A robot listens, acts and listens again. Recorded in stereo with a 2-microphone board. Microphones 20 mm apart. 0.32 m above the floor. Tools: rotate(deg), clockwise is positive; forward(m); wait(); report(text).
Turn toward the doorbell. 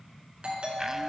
rotate(60)
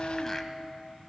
wait()
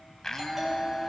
report("Found it: a doorbell, straight ahead, over 4 m away.")